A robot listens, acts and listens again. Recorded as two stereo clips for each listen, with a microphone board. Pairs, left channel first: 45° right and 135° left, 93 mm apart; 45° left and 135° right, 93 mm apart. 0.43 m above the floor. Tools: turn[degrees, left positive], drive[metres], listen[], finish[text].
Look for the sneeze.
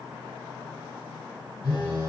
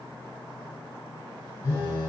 Action: listen[]
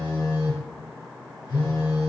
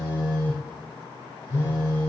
Action: listen[]
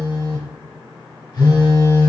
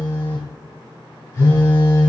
Action: finish[I can't make out a sneeze, only a phone buzzing.]